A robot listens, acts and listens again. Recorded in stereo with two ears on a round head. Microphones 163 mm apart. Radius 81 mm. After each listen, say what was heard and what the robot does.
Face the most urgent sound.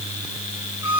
Keep listening.
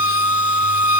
Keep listening.
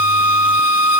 I can't make out anything urgent to turn to.